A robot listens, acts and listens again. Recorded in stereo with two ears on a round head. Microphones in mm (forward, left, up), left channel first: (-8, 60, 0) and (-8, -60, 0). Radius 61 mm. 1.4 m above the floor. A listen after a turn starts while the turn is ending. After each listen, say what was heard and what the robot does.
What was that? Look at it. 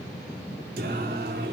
Turn 90° right.
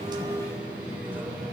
So it is at 15° right. Turn 15° right.
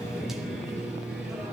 Facing the singing.